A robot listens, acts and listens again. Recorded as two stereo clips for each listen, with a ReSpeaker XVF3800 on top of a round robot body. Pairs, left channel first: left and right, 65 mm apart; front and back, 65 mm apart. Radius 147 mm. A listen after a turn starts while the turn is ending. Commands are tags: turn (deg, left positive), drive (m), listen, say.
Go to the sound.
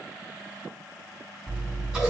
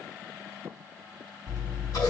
<drive m="1.0"/>
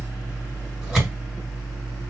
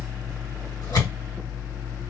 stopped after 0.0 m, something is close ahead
<say>Something is in my way. I am facing the scissors but have not reached it.</say>